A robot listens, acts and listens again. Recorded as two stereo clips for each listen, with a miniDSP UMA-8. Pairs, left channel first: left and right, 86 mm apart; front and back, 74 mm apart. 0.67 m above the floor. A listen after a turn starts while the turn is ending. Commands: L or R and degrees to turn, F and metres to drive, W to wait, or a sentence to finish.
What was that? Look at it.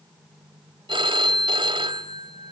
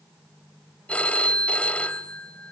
R75
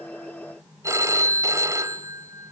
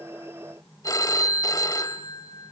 R35
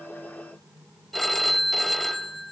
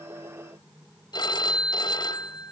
Found it: a phone ringing, straight ahead, 1 to 2 m away.